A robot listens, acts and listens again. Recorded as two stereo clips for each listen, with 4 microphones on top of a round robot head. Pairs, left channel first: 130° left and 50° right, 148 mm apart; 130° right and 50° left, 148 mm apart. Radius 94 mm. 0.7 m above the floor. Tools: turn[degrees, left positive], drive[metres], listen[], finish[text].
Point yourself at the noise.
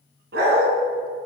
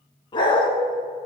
Thought: The dog barking: 70° right.
Action: turn[-70]
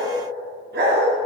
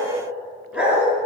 Thought: The dog barking is now 35° right.
Action: turn[-35]
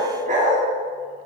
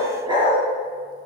Thought: The dog barking is now 10° right.
Action: turn[-10]
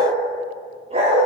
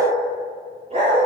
Action: finish[Facing the dog barking.]